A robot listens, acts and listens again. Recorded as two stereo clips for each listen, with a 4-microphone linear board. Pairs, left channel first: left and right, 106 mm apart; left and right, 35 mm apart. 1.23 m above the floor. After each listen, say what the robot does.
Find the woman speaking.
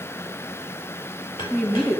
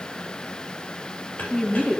Turn 30° left.
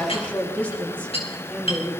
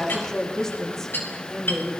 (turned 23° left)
Turn 30° left.
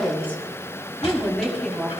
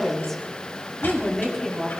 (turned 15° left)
Turn 30° left.
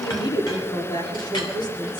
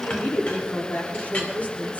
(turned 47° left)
Turn 135° left.
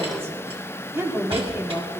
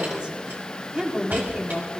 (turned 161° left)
Turn 25° right.
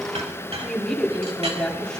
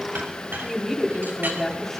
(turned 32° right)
Found it: a woman speaking, straight ahead.